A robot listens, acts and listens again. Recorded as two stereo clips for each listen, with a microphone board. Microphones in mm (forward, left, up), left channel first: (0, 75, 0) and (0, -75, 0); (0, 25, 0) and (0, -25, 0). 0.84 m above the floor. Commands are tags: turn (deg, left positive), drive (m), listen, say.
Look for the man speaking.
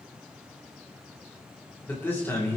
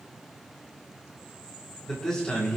<turn deg="20"/>
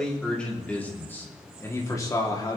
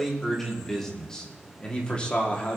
<turn deg="30"/>
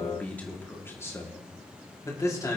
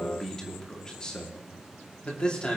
<turn deg="20"/>
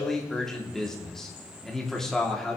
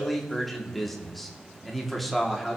<turn deg="30"/>
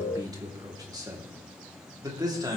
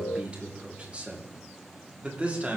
<turn deg="-25"/>
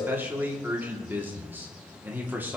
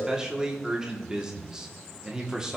<turn deg="-15"/>
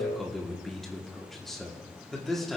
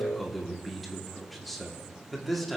<say>Found it: a man speaking, straight ahead.</say>